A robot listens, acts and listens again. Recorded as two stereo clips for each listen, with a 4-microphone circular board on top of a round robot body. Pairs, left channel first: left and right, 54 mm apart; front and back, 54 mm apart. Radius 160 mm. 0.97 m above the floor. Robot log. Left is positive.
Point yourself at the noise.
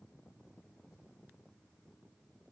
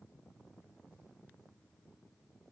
cmd idle
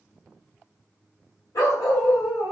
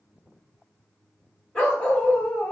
note: The dog barking: 70° left.
cmd yaw +70
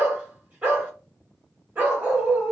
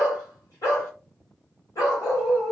note: The dog barking is now 30° right.
cmd yaw -30
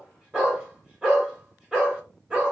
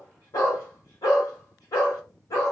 note: The dog barking is now 10° right.
cmd yaw -10
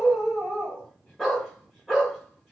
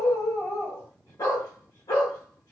end: Found it: a dog barking, straight ahead, 1 to 2 m away.